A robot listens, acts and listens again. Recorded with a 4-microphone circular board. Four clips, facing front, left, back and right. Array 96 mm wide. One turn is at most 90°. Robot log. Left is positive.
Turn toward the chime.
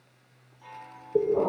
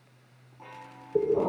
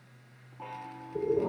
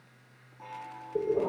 note: The chime: straight behind.
cmd yaw +90
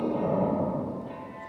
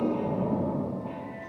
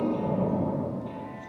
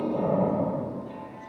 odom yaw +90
note: Nothing new. It was at 90° left.
cmd yaw +90
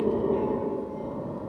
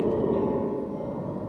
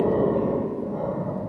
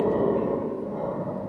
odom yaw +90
cmd idle
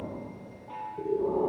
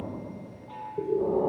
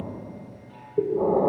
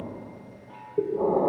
note: The chime is now 20° left.
cmd yaw +20
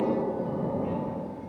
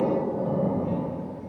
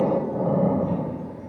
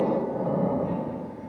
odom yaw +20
cmd idle
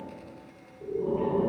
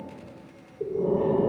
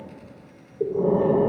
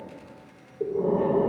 cmd idle
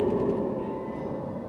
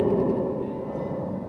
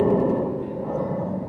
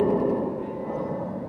end: I heard a chime from this way, but can't make it out now.